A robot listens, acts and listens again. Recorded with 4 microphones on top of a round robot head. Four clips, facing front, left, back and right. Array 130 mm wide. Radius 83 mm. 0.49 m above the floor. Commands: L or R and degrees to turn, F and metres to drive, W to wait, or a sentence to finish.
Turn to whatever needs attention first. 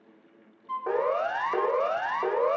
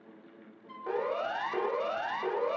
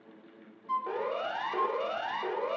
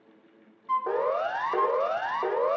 R45
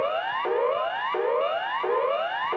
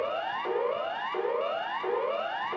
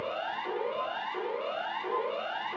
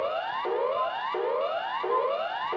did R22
R25
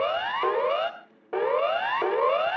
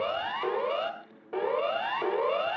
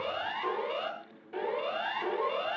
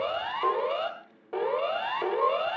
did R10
R15
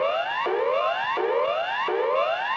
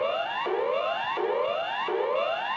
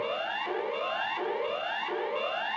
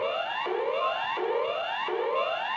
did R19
Found it: a siren, straight ahead.